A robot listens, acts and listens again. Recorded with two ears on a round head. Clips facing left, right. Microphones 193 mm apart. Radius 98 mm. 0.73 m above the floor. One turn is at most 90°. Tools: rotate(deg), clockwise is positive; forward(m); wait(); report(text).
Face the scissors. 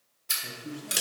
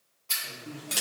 rotate(-20)
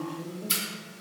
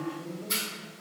rotate(-90)
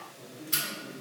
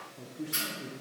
rotate(-45)
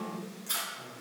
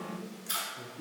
report("Facing the scissors, 1 to 2 m away.")